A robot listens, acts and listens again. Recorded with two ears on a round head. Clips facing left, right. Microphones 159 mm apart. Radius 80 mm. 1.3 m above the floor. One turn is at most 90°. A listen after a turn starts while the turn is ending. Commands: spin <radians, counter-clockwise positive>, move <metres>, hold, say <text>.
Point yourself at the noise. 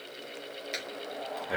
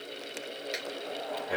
spin 0.52
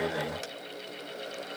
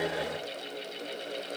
hold
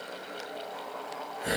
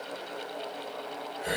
spin 1.57
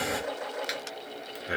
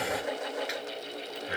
spin 1.13
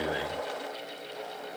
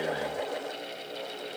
hold
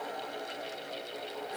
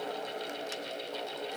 hold
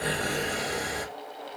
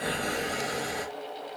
say Found it: breathing, straight ahead.